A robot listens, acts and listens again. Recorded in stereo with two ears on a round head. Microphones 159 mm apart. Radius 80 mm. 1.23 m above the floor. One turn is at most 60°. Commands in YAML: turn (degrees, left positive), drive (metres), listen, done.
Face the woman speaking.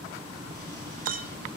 listen: true
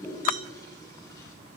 listen: true
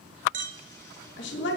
turn: 60
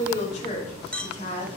turn: 40
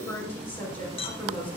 turn: 10
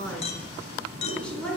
done: "Facing the woman speaking."